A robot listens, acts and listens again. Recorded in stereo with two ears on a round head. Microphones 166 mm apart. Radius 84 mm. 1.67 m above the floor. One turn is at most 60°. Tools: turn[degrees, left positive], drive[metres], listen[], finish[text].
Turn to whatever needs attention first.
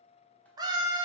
Thought: The scream: about 25° right or 155° right.
Action: turn[-25]
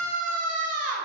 Thought: So it is at 130° right.
Action: turn[-60]
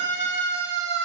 Thought: The scream is now 80° right.
Action: turn[-60]
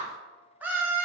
Thought: The scream is now 10° right.
Action: turn[-10]
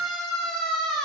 Action: finish[Found it: a scream, straight ahead.]